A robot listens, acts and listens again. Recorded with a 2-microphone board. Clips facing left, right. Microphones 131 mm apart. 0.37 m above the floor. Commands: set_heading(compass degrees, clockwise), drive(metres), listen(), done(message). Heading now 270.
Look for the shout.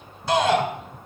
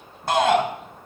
set_heading(330)
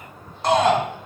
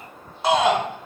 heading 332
done("Found it: a shout, straight ahead, 2 to 4 m away.")